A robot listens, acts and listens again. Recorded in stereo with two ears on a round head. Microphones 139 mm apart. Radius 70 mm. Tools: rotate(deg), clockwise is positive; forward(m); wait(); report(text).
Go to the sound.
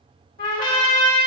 rotate(-55)
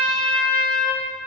forward(1.0)
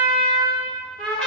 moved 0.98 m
forward(1.0)
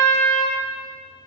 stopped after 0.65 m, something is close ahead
rotate(-15)
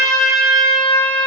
report("Arrived at the trumpet, straight ahead.")